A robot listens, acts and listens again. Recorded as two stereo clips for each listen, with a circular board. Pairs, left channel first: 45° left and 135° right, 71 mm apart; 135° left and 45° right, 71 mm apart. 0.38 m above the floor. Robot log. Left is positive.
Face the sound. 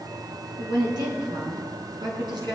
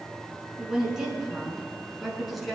note: The woman speaking: 135° right.
cmd yaw -135
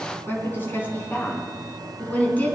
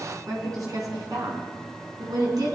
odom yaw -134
note: The woman speaking is now 25° right.
cmd yaw -25
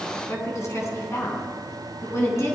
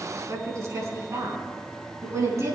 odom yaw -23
end: Facing the woman speaking, over 4 m away.